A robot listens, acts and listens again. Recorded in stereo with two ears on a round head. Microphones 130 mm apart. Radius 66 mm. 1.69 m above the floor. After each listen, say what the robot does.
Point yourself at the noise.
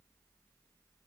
Keep listening.
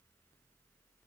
Keep listening.
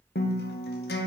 Turn 75° left.
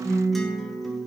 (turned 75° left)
Found it: a guitar, straight ahead.